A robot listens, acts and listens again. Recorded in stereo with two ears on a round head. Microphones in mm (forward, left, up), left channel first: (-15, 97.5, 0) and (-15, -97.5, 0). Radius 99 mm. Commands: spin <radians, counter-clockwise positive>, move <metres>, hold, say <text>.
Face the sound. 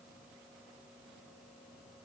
hold
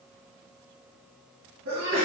spin -1.22
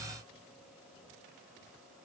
hold
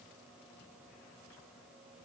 say I heard a sneeze, but can't make it out now. It was about straight ahead or 40° right.